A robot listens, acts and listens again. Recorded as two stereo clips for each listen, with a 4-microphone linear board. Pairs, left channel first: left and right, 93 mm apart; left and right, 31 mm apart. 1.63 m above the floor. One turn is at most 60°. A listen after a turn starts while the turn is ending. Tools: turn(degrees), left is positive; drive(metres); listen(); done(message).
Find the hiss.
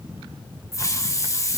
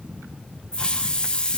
turn(degrees=35)
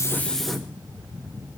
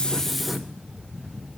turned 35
listen()
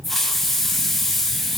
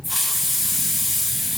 done("Facing the hiss.")